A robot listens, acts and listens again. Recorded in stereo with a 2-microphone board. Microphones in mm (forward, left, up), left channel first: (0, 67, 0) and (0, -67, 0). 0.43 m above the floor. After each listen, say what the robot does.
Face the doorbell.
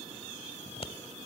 Keep listening.
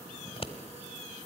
Keep listening.
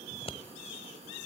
I can't make out a doorbell to turn to.